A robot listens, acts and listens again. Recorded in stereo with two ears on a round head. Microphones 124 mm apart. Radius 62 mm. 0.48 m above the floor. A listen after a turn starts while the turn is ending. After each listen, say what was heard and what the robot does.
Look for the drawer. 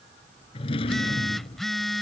The drawer: about 40° left or 140° left. Turn 40° left.
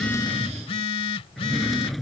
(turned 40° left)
Facing the drawer.